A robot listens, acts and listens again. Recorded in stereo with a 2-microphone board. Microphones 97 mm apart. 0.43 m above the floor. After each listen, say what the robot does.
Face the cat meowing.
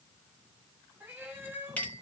Turn 20° right.
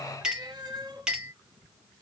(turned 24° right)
Turn 135° right.
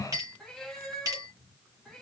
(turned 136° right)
Facing the cat meowing, 2 to 4 m away.